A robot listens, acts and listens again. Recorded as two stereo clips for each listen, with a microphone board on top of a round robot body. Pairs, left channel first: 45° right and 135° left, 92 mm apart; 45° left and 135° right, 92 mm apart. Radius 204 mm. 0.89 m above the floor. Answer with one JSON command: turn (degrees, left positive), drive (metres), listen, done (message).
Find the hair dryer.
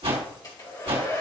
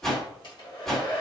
{"done": "Found it: a hair dryer, straight ahead, 2 to 4 m away."}